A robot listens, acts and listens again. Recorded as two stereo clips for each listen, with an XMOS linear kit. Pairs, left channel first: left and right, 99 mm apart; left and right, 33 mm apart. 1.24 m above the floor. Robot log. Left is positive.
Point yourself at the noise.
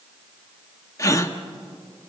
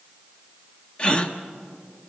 note: The gasp: about 30° left or 150° left.
cmd yaw +30
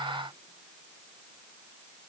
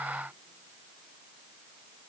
cmd idle
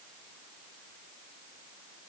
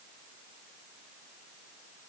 end: I heard a gasp, but can't make it out now. It was about straight ahead or 120° left.